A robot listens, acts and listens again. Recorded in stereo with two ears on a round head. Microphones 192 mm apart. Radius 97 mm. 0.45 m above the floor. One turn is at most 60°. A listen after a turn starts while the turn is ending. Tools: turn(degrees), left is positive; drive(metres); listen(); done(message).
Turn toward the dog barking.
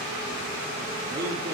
listen()
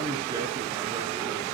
listen()
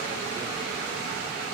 done("I can't make out a dog barking, only a man speaking.")